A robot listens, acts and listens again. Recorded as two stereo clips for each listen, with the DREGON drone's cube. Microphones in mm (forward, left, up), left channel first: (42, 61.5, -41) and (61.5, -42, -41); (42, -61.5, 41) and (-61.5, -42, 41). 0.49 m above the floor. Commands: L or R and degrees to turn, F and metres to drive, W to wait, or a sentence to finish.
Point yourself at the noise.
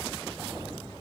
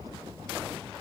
W
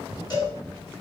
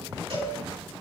L150
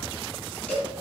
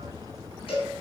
L20
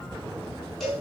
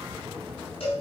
L10
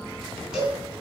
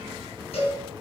Facing the cowbell.